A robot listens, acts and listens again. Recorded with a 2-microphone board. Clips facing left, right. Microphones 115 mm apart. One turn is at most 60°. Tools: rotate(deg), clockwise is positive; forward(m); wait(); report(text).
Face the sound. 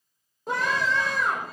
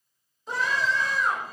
rotate(-55)
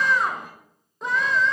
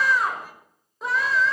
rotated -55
report("Facing the scream, over 4 m away.")